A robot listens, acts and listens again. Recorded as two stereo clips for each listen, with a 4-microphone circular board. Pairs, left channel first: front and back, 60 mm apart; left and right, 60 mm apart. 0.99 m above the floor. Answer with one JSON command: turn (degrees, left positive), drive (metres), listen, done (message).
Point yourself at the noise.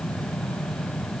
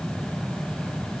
{"listen": true}
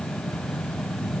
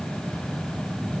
{"listen": true}
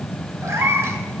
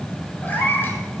{"turn": 140}
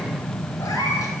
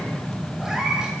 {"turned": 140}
{"turn": -15}
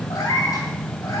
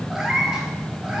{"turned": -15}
{"turn": -10}
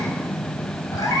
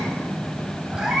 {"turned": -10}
{"turn": -10}
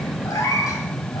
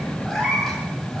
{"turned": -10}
{"done": "Found it: a cat meowing, straight ahead."}